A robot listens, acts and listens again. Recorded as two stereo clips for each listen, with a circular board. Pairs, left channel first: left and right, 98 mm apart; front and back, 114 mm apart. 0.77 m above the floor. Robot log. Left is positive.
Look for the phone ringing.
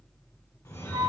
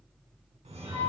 note: The phone ringing: 150° left.
cmd yaw +150
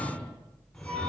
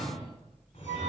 note: The phone ringing is now 10° left.
cmd yaw +10
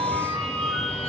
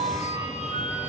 end: Facing the phone ringing.